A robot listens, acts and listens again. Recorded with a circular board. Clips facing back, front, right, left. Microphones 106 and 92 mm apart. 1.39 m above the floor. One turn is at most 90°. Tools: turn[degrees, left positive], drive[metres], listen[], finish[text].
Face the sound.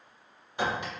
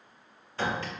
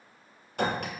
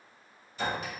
Thought: The clink: 110° right.
Action: turn[-90]
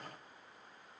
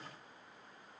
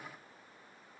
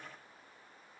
Thought: Nothing new. It was at 20° right.
Action: turn[-20]
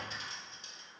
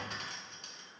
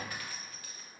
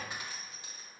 Thought: The clink is now 25° left.
Action: turn[25]
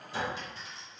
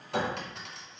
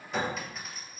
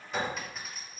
Action: finish[Facing the clink, under 1 m away.]